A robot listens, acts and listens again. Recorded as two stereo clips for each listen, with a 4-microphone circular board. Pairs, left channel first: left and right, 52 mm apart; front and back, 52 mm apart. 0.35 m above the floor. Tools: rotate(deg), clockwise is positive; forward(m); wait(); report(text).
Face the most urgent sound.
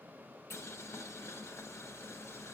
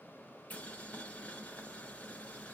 wait()
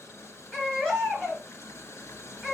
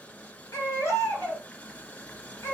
rotate(-15)
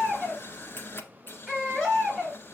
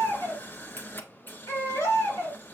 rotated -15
report("Facing the baby crying.")